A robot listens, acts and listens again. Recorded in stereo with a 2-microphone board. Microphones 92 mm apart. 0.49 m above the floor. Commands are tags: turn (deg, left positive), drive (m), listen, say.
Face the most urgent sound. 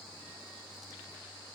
<listen/>
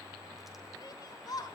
<turn deg="45"/>
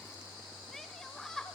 <say>Facing the shout, 1 to 2 m away.</say>